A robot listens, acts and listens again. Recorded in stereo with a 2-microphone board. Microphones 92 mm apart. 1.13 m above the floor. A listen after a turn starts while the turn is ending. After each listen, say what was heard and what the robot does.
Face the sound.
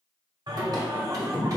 The singing: about 35° right or 145° right. Turn 35° right.
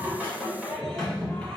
So it is at 15° left. Turn 15° left.
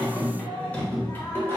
The singing is now 25° left. Turn 25° left.
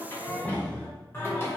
The singing is now 30° left. Turn 30° left.
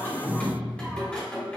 The singing is now 15° left. Turn 15° left.
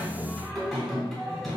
Facing the singing.